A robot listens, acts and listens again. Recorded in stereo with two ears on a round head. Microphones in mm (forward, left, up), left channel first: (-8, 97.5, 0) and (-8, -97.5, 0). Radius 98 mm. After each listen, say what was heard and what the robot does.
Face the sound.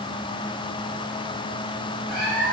Turn 30° right.
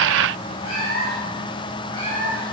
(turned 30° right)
So it is at 20° left. Turn 20° left.
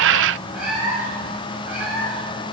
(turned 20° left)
The cat meowing is now 10° right. Turn 10° right.
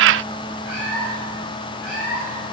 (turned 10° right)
Found it: a cat meowing, straight ahead.